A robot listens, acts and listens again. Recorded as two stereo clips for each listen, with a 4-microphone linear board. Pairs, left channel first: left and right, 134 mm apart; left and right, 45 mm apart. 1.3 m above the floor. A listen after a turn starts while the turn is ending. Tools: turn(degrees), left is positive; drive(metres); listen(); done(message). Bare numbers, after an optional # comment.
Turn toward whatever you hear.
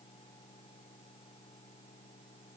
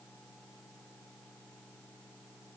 listen()
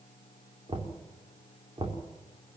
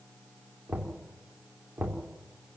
# The knocking: about 40° right or 140° right.
turn(-40)
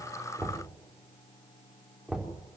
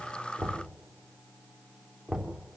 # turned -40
done("Facing the knocking.")